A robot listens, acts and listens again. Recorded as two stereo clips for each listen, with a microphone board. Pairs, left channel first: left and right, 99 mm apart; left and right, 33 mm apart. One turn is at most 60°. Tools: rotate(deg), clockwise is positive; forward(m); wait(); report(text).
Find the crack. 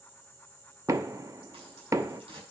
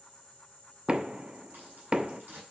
rotate(60)
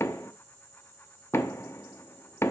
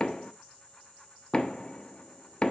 wait()
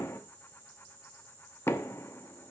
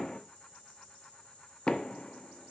report("I heard a crack, but can't make it out now. It was about 5° right or 55° right.")